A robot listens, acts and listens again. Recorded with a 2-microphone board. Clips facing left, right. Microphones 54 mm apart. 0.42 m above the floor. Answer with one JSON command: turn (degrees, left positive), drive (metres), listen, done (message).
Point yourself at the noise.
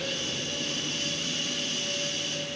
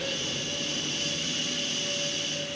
{"listen": true}
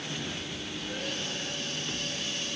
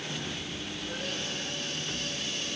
{"listen": true}
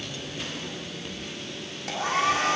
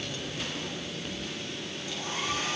{"turn": 90}
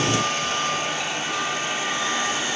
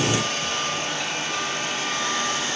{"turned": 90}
{"turn": 10}
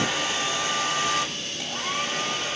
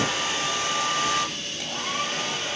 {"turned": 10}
{"done": "Facing the hair dryer."}